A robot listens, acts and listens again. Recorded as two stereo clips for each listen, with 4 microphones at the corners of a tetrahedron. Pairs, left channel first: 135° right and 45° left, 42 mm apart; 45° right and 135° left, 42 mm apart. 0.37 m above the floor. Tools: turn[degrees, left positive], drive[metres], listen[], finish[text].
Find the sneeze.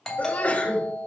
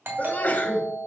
Thought: The sneeze: 90° right.
Action: turn[-90]
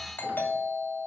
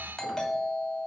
Action: finish[Facing where the sneeze came from. I can't hear it now.]